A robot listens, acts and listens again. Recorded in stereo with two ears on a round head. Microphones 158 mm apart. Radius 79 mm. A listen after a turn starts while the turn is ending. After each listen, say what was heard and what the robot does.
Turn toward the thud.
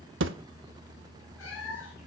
Turn 90° right.
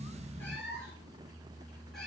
I heard a thud from this way, but can't make it out now.